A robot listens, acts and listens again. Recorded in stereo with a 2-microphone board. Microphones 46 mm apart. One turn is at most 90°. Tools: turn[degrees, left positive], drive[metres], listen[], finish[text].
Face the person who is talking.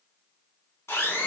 Action: listen[]
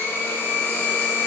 Action: listen[]
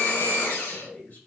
Thought: The man speaking: about 40° left or 140° left.
Action: turn[40]
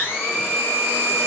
Action: listen[]
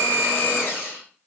Action: listen[]
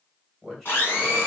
Action: finish[Facing the man speaking, 1 to 2 m away.]